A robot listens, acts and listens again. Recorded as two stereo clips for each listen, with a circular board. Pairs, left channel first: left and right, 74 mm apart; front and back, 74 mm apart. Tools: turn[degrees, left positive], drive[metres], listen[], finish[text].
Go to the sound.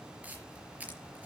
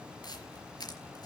Thought: The camera shutter: 20° right.
Action: turn[-20]
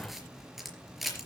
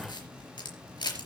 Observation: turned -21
Action: drive[1.0]
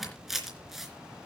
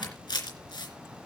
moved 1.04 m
Action: drive[1.0]
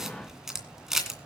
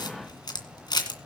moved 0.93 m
Action: drive[1.0]
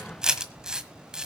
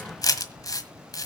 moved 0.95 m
Thought: The camera shutter is now 10° right.
Action: turn[-10]
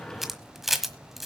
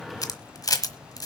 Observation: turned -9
Action: drive[1.0]
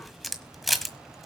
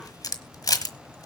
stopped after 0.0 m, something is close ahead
Action: finish[Arrived at the camera shutter, straight ahead.]